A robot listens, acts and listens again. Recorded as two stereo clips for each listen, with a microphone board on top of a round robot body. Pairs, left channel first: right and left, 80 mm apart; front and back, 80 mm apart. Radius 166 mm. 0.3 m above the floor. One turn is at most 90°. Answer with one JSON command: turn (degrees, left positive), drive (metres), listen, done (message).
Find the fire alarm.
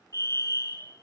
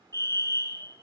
{"turn": -45}
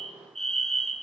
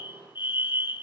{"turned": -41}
{"done": "Found it: a fire alarm, straight ahead, over 4 m away."}